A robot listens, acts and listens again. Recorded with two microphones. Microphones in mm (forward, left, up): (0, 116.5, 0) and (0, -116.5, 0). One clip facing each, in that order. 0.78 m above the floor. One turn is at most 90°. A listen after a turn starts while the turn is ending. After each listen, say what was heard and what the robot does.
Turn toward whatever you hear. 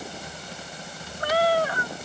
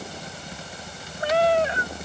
The cat meowing: about 20° right or 160° right. Turn 20° right.
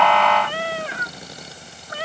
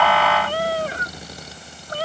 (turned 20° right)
The cat meowing: about 40° right or 140° right. Turn 40° right.
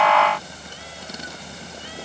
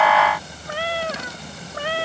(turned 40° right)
So it is at 110° right. Turn 90° right.
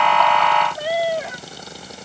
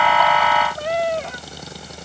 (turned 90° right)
Found it: a cat meowing, straight ahead.